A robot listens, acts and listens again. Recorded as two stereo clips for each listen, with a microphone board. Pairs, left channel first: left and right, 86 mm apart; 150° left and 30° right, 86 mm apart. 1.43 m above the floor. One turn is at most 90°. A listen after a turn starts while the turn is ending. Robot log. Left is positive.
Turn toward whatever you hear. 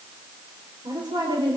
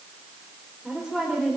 note: The woman speaking: 120° right.
cmd yaw -90
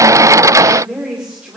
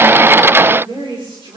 note: The woman speaking is now 10° right.
cmd yaw -10
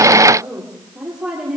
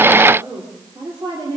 note: The woman speaking is now 10° right.
cmd yaw -10
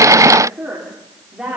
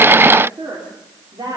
end: Facing the woman speaking.